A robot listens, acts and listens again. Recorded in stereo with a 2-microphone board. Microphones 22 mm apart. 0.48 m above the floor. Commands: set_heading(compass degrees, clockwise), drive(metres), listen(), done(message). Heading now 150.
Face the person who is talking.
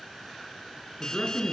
set_heading(110)
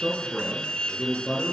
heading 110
done("Facing the man speaking, over 4 m away.")